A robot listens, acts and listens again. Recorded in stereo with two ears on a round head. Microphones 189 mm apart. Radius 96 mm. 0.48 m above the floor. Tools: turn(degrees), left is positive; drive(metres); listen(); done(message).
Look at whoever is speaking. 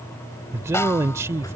turn(degrees=-30)
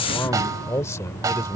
turn(degrees=15)
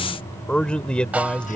done("Found it: a man speaking, straight ahead.")